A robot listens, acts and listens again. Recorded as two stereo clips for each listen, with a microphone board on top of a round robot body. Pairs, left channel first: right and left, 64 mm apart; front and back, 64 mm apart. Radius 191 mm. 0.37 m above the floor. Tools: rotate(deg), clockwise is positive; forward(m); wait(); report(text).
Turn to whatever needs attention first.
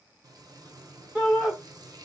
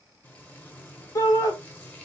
rotate(-15)
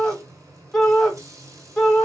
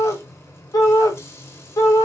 report("Facing the shout.")